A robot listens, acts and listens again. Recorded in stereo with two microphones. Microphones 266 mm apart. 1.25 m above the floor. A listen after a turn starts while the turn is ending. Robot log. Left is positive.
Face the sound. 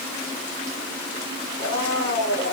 cmd yaw +90
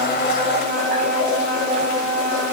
end: Found it: a blender, straight ahead.